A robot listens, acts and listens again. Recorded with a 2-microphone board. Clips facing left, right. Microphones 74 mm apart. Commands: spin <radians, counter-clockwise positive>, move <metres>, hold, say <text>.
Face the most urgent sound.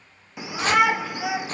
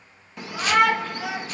spin 0.52
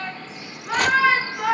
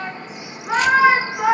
spin -0.35
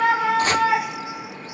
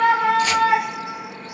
say Found it: a shout, straight ahead, under 1 m away.